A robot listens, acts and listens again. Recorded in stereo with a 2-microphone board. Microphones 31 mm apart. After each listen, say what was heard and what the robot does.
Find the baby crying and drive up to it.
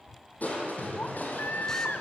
The baby crying: about 70° left or 110° left. Turn 70° left.
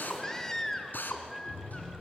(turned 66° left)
So it is at 15° left. Turn 15° left.
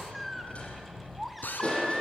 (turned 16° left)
Drive 1.0 m forward.
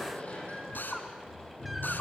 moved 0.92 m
Keep listening.
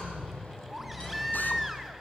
Drive 1.0 m forward.
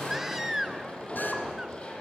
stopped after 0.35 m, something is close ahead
The baby crying is now 15° right. Turn 15° right.
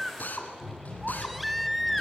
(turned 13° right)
Arrived at the baby crying, straight ahead.